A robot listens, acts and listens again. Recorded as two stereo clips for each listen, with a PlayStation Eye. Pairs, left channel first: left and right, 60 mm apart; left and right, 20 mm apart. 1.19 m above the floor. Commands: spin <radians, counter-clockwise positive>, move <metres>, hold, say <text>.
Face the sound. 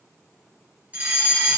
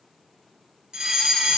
spin -0.44
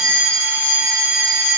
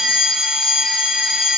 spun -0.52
spin -2.09
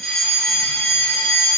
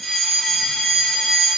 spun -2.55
spin 0.44
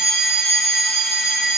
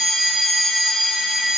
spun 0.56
say Found it: a fire alarm, straight ahead, 1 to 2 m away.